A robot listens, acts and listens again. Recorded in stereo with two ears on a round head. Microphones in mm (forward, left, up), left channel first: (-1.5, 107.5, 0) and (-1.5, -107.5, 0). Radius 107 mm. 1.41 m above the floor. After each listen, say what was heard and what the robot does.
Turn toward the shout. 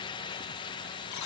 Keep listening.
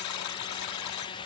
Keep listening.
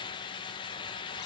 I can't make out a shout, only a buzzer.